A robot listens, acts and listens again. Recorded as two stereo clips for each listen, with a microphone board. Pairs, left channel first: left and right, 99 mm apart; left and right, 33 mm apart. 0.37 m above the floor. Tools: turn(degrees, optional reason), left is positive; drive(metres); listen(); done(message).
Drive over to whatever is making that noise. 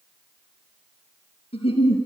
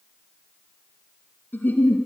turn(degrees=90)
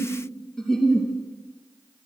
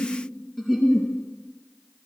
drive(metres=1.0)
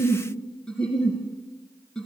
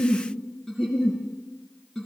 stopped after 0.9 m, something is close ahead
turn(degrees=10, reason="The giggle is now 10° left.")
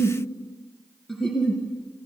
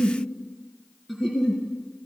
done("Blocked. The giggle is further on, straight ahead.")